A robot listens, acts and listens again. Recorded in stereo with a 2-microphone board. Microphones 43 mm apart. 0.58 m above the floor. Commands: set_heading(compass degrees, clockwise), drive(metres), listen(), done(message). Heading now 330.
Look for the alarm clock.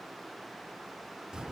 listen()
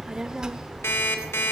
set_heading(240)
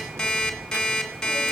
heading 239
set_heading(224)
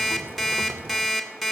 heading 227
done("Found it: an alarm clock, straight ahead, 2 to 4 m away.")